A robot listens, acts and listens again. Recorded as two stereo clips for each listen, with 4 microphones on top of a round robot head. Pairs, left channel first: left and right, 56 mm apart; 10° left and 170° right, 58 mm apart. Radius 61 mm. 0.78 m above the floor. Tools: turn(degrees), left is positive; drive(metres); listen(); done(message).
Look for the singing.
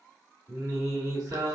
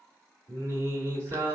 turn(degrees=-115)
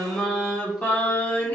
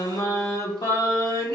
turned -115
turn(degrees=30)
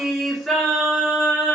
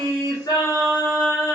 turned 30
turn(degrees=15)
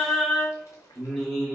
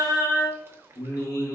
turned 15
turn(degrees=10)
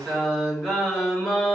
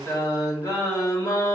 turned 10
done("Found it: singing, straight ahead.")